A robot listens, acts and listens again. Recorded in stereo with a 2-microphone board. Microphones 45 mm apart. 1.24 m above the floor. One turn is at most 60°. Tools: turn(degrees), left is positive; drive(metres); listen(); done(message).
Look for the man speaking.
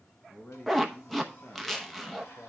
turn(degrees=60)
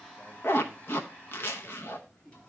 turn(degrees=15)
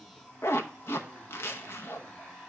listen()
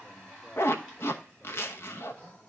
listen()
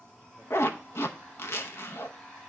done("I heard a man speaking from this way, but can't make it out now.")